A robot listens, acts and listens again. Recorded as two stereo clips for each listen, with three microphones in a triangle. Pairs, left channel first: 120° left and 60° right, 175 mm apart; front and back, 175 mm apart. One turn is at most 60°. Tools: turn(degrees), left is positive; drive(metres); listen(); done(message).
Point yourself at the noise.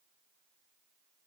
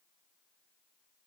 listen()
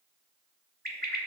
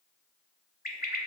turn(degrees=-30)
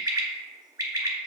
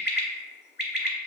turn(degrees=10)
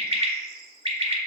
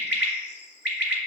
done("Facing the bird, under 1 m away.")